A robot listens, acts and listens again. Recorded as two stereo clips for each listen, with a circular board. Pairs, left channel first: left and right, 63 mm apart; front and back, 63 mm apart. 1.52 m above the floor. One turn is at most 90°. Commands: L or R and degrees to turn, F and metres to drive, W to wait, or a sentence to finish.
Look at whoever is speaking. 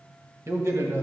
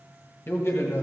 R55
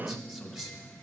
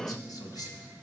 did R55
Found it: a man speaking, straight ahead, 1 to 2 m away.